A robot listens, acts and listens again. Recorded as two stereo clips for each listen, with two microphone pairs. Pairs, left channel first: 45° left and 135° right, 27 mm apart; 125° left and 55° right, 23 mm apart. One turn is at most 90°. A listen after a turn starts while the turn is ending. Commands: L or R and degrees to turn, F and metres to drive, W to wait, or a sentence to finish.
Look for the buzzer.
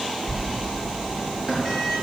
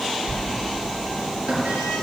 W
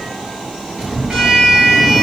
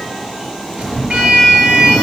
W
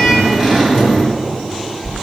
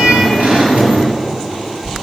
I can't make out a buzzer, only a sliding door.